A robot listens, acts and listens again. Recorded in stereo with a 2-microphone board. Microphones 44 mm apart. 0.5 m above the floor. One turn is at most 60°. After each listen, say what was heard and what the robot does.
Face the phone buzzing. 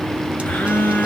The phone buzzing: about 55° left or 125° left. Turn 55° left.
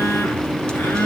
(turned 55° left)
So it is at 70° left. Turn 60° left.
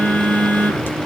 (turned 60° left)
The phone buzzing is now 30° left. Turn 30° left.
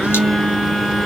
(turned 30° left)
Found it: a phone buzzing, straight ahead.